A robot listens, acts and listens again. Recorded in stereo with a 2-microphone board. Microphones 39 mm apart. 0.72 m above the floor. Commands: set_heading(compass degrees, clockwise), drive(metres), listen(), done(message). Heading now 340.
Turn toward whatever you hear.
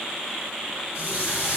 set_heading(15)
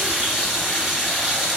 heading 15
done("Facing the running tap.")